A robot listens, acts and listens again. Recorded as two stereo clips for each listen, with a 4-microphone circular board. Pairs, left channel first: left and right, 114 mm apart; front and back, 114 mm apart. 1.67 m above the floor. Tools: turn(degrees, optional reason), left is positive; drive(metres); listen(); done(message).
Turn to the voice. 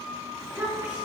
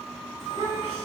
turn(degrees=-160, reason="The child speaking: 160° right.")
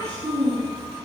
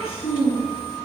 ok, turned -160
turn(degrees=-35, reason="The child speaking is now 35° right.")
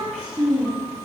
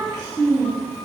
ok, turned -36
turn(degrees=-15, reason="The child speaking is now 15° right.")
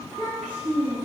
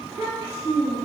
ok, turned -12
turn(degrees=-15, reason="The child speaking is now 15° right.")
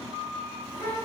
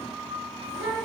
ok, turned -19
done("Found it: a child speaking, straight ahead, 2 to 4 m away.")